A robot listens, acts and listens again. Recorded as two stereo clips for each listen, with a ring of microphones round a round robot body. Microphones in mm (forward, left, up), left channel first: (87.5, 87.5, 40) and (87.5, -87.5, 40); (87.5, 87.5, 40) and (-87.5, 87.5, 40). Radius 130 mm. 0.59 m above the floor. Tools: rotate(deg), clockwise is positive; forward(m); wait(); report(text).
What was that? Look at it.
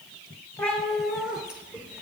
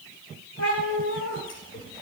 report("Facing the cat meowing, 1 to 2 m away.")